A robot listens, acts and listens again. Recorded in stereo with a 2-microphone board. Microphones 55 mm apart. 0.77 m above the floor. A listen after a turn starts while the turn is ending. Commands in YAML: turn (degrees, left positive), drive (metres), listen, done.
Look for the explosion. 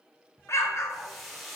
turn: 60
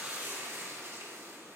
listen: true
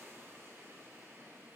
done: "I heard an explosion, but can't make it out now. It was about straight ahead or 60° left."